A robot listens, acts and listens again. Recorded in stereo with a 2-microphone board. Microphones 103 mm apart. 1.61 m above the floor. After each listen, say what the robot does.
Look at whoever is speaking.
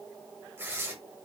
Keep listening.
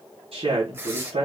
Turn 90° right.
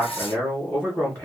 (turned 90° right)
Turn 15° left.
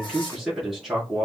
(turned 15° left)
Found it: a man speaking, straight ahead.